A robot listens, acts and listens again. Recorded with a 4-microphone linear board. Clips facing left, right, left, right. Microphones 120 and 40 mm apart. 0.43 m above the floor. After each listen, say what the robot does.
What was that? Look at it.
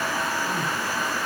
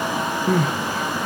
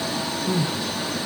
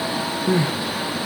Turn 90° right.
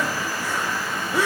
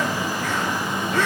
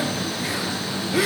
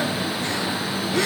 Turn 10° left.
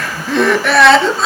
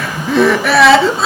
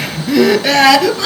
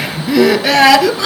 Facing the crying, 1 to 2 m away.